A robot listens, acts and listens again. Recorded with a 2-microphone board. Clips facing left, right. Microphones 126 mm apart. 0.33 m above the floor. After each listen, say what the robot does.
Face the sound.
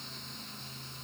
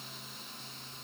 Keep listening.
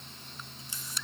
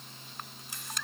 Turn 65° right.
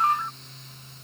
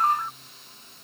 Found it: a camera shutter, straight ahead.